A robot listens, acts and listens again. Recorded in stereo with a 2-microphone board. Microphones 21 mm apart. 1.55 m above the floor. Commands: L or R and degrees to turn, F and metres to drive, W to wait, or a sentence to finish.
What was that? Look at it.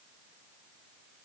W
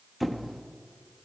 L30
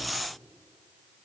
L145
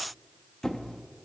L35
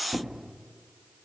Facing the squeak.